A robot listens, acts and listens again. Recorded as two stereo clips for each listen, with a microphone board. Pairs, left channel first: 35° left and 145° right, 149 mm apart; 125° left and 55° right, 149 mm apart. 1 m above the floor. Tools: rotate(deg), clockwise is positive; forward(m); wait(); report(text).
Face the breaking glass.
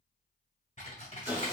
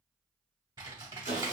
wait()
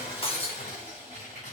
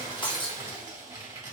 rotate(-75)
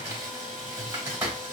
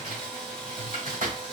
report("Facing where the breaking glass came from. I can't hear it now.")